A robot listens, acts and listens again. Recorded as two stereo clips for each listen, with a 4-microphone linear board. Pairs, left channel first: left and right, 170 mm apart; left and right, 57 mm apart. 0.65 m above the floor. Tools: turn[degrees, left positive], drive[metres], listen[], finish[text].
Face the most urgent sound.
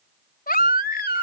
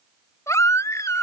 Thought: The baby crying: about 60° left or 120° left.
Action: turn[60]
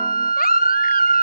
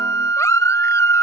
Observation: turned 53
Thought: So it is at 65° left.
Action: turn[65]
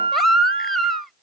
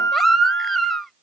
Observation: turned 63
Action: finish[Found it: a baby crying, straight ahead.]